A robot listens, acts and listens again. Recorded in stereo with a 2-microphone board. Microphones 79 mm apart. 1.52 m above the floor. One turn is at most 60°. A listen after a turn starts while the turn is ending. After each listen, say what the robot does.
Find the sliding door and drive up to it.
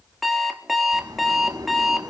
Turn 60° right.
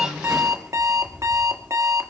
Drive 1.0 m forward.
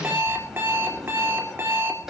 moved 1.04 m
Drive 1.0 m forward.
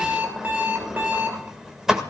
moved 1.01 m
Drive 1.0 m forward.
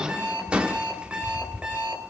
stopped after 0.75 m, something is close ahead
Turn 15° right.
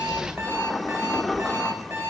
I am next to the sliding door.